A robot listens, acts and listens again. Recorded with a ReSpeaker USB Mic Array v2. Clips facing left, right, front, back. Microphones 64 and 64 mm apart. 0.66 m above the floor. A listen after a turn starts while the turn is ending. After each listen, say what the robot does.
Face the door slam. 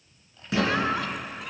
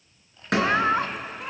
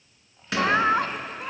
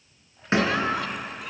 Turn 120° right.
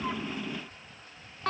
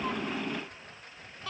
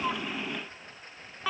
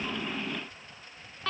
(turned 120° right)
Facing where the door slam came from. I can't hear it now.